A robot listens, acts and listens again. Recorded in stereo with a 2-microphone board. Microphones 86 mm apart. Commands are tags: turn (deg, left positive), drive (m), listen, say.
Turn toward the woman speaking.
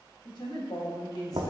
<turn deg="45"/>
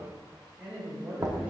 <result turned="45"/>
<turn deg="-15"/>
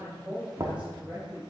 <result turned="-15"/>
<turn deg="-15"/>
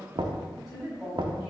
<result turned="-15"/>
<say>Found it: a woman speaking, straight ahead.</say>